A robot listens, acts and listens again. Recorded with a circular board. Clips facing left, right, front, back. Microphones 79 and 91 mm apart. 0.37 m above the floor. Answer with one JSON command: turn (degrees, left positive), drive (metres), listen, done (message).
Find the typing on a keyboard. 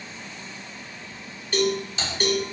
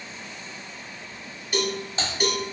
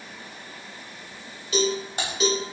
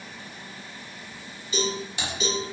{"turn": -45}
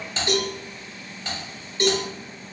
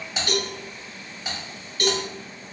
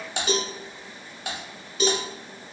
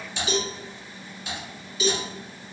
{"turn": -10}
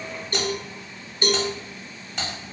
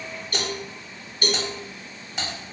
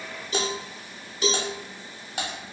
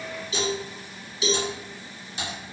{"done": "Facing the typing on a keyboard, 1 to 2 m away."}